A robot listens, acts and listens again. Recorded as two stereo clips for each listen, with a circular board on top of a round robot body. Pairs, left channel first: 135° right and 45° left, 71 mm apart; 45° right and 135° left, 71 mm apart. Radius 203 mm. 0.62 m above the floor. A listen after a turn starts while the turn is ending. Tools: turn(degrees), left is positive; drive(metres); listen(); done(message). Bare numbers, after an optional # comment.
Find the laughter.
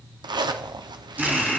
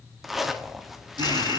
# The laughter: 130° left.
turn(130)
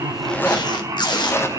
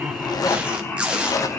# The laughter is now 10° left.
turn(10)
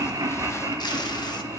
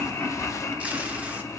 done("Facing the laughter.")